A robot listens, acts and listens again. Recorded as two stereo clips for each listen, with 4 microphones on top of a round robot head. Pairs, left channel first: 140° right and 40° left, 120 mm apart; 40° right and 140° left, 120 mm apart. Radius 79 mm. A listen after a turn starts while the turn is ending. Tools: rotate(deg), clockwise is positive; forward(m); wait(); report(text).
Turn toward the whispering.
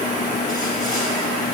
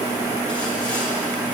wait()
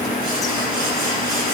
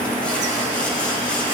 wait()
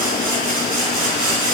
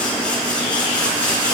report("I can't make out whispering to turn to.")